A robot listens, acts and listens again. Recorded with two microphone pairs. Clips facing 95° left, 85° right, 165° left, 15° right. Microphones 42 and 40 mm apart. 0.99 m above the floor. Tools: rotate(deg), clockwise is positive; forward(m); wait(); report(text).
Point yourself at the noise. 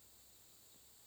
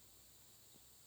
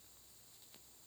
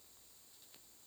wait()
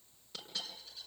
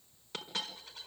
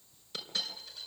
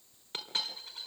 rotate(60)
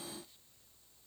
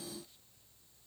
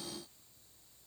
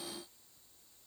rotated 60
report("I heard a dropped coin from this way, but can't make it out now.")